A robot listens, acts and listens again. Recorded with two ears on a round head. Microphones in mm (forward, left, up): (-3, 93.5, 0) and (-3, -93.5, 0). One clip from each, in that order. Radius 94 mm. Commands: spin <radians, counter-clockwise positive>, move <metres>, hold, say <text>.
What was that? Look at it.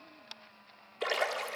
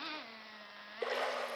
spin 1.13
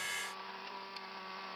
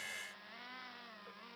hold
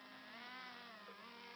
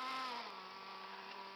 say I heard a splash, but can't make it out now. It was about straight ahead or 50° left.